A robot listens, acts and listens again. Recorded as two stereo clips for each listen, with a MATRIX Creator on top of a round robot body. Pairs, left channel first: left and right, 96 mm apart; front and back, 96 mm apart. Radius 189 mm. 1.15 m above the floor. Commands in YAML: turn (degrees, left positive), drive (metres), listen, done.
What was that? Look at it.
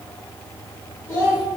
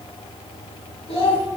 turn: 30
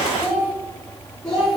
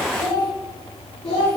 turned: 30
done: "Facing the child speaking, 2 to 4 m away."